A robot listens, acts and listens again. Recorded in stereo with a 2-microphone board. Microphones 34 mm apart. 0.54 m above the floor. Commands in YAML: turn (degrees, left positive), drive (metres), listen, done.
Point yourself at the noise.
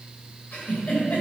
turn: 40
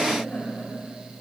turn: 95
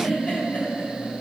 turn: 35
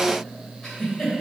turn: 15
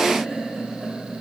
turn: 10
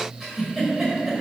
done: "Found it: a giggle, straight ahead, 1 to 2 m away."